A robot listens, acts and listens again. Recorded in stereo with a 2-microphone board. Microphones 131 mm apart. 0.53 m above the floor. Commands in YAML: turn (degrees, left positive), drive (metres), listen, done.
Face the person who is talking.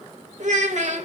turn: -70
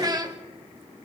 turn: -35
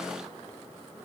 listen: true
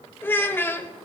turn: 15
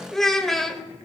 done: "Facing the child speaking, 1 to 2 m away."